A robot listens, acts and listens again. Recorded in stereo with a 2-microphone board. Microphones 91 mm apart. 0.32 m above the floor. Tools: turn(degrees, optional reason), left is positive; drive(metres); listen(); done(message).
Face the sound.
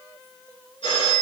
turn(degrees=90)
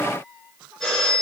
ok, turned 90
done("Facing the phone ringing, 2 to 4 m away.")